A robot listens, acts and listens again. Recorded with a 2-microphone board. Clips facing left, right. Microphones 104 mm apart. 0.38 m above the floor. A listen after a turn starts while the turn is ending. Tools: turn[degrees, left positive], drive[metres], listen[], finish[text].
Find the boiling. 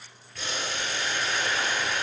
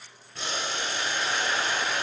Thought: The boiling: about 25° right or 155° right.
Action: turn[-25]
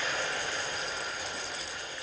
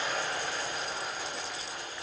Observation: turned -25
Thought: So it is at 130° right.
Action: turn[-130]
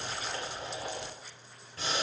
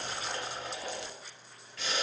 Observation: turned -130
Thought: The boiling is now 35° left.
Action: turn[35]
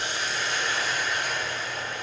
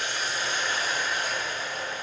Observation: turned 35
Thought: The boiling is now 15° right.
Action: turn[-15]
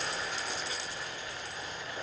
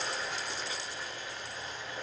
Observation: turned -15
Action: finish[Found it: boiling, straight ahead, 1 to 2 m away.]